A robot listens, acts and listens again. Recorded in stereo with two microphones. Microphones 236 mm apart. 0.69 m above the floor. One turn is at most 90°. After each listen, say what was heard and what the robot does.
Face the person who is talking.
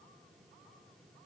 Keep listening.
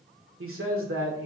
The man speaking: about 65° right or 115° right. Turn 65° right.
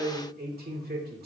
So it is at 45° right. Turn 45° right.
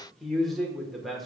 Found it: a man speaking, straight ahead.